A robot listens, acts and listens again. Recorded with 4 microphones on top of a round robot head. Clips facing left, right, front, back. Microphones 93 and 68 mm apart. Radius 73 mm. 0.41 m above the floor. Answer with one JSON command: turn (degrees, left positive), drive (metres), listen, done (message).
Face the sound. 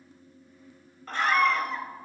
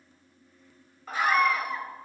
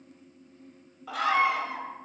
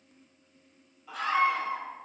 {"done": "Facing the scream."}